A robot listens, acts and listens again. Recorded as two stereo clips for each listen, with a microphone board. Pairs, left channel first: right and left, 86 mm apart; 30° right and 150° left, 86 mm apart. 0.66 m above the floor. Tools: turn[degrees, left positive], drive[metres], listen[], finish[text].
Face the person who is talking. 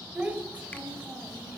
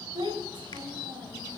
Thought: The child speaking: 165° left.
Action: turn[165]
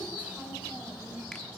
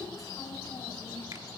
Thought: The child speaking is now 15° left.
Action: turn[15]
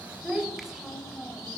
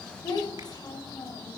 Action: finish[Facing the child speaking.]